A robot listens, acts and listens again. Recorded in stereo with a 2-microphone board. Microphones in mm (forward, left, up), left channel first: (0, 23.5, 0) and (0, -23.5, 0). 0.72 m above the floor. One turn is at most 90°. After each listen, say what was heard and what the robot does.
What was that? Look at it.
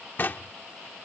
The knocking: about 45° left or 135° left. Turn 45° left.
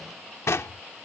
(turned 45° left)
So it is at 90° left. Turn 90° left.
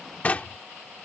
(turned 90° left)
The knocking is now 35° left. Turn 35° left.
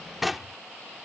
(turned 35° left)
Facing the knocking.